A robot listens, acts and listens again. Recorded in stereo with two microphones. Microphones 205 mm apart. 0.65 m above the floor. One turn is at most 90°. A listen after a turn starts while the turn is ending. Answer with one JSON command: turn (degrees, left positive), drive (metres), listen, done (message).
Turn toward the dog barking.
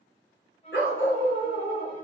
{"turn": 90}
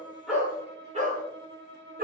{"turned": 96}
{"turn": -50}
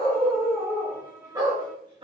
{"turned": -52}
{"turn": -25}
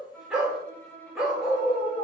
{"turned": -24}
{"done": "Facing the dog barking, 2 to 4 m away."}